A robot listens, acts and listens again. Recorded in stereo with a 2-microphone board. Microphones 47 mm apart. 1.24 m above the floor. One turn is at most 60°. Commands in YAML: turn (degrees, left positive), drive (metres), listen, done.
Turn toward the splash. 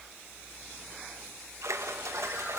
turn: -60
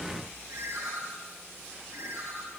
turn: -30
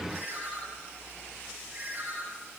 done: "Facing where the splash came from. I can't hear it now."